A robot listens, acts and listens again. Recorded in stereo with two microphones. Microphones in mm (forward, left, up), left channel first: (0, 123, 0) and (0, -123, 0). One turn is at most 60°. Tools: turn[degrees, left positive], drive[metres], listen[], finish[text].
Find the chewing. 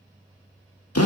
Action: listen[]
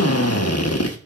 Action: listen[]
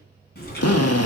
Thought: The chewing: about 40° left or 140° left.
Action: turn[40]
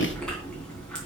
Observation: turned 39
Action: finish[Found it: chewing, straight ahead.]